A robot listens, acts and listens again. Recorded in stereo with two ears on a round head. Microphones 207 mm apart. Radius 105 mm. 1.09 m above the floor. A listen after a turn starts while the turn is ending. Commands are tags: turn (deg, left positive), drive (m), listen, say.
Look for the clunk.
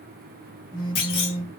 <turn deg="65"/>
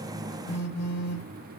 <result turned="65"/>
<listen/>
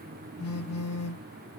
<say>I heard a clunk, but can't make it out now. It was about straight ahead or 50° left.</say>